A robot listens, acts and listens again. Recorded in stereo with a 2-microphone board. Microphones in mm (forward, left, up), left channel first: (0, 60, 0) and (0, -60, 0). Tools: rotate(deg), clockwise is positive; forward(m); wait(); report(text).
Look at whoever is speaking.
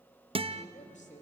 rotate(-90)
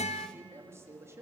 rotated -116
rotate(20)
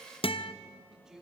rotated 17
report("Found it: a man speaking, straight ahead.")